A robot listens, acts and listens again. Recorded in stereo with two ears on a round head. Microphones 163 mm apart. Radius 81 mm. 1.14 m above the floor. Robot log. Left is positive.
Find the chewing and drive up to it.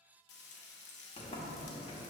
cmd idle
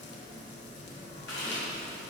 note: The chewing: about 70° left or 110° left.
cmd yaw +70
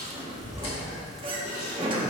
note: So it is at 35° left.
cmd yaw +35
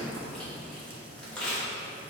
cmd fwd 1.0
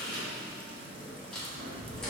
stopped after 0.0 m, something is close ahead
end: Something is in my way. I am facing the chewing but have not reached it.